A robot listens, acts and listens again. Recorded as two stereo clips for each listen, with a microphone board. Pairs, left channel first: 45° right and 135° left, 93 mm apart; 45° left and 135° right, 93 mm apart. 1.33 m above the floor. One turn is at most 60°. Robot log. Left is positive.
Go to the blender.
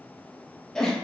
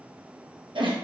cmd idle
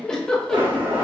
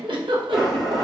note: The blender: 135° left.
cmd yaw +60
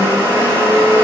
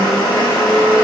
note: The blender is now 75° left.
cmd yaw +60
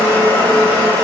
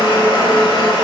note: The blender is now 15° left.
cmd yaw +15
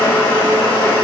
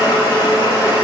cmd fwd 1.0
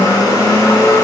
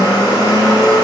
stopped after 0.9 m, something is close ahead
end: Arrived at the blender, straight ahead.